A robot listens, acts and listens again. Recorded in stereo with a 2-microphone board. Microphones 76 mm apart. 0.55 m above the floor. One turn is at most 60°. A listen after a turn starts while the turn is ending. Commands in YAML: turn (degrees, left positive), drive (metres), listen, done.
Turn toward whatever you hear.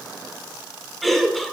turn: 30
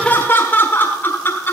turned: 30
turn: 60
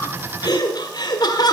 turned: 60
turn: 60
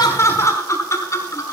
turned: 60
turn: 45
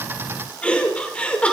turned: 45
turn: 15
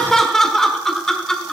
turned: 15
done: "Found it: laughter, straight ahead, 1 to 2 m away."